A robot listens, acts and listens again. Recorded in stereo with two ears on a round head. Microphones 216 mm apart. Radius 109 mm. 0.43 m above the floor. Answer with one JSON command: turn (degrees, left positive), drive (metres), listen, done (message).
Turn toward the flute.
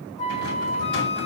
{"turn": 30}
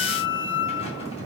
{"turn": 120}
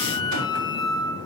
{"turn": 20}
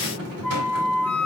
{"done": "Found it: a flute, straight ahead, 1 to 2 m away."}